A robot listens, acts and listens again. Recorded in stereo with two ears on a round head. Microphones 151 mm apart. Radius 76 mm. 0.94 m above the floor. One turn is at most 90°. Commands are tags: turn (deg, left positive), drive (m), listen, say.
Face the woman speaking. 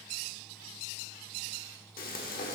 <listen/>
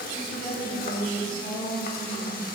<turn deg="55"/>
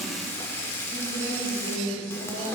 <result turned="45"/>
<turn deg="65"/>
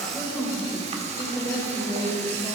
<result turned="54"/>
<turn deg="15"/>
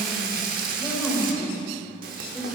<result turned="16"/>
<say>Found it: a woman speaking, straight ahead.</say>